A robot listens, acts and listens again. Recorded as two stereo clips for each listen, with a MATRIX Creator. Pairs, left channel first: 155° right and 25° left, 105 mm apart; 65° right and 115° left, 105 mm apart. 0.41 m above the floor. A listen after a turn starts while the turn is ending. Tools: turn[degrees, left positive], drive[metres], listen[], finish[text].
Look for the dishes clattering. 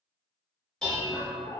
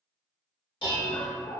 Thought: The dishes clattering: 75° right.
Action: turn[-75]
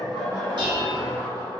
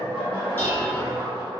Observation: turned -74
Action: finish[Facing the dishes clattering, 1 to 2 m away.]